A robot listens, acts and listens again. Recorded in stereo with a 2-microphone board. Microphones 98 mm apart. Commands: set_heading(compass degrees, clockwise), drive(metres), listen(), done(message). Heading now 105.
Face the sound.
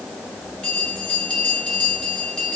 set_heading(75)
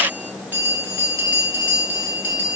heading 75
set_heading(95)
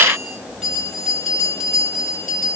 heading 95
done("Facing the bell.")